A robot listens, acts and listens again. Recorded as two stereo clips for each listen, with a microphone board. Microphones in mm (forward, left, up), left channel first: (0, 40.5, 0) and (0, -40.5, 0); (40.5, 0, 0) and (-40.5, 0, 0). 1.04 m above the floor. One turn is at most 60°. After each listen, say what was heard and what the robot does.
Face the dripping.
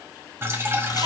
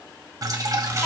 The dripping: 145° right. Turn 60° right.
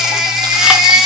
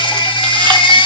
Nothing new. It was at 85° right. Turn 60° right.
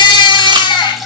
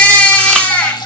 Facing the dripping.